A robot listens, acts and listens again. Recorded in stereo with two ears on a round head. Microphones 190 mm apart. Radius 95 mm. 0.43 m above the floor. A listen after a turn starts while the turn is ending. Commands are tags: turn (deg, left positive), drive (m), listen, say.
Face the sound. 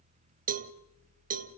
<turn deg="-40"/>
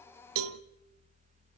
<turn deg="-100"/>
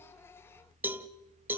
<turn deg="-10"/>
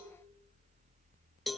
<say>Facing the cowbell, under 1 m away.</say>